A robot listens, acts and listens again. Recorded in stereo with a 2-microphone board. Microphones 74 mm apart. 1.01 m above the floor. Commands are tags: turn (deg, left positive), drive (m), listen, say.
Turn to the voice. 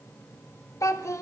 <turn deg="45"/>
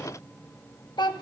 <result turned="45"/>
<turn deg="90"/>
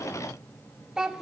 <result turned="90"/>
<turn deg="-10"/>
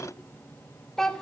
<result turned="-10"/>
<say>Found it: a child speaking, straight ahead, 1 to 2 m away.</say>